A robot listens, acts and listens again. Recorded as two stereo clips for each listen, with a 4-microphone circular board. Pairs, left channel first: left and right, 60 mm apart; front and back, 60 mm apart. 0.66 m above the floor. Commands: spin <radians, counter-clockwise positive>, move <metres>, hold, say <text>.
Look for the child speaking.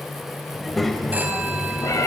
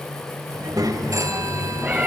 spin 3.05
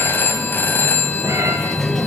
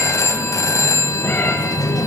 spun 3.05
say Facing the child speaking, 2 to 4 m away.